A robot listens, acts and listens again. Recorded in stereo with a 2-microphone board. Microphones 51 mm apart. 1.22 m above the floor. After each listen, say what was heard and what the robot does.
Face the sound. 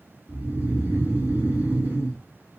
The snoring: about 45° right or 135° right. Turn 45° right.
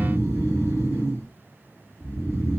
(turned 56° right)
So it is at 70° right. Turn 70° right.
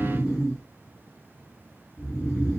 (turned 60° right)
The snoring is now 10° right. Turn 10° right.
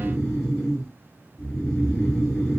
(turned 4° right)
Facing the snoring.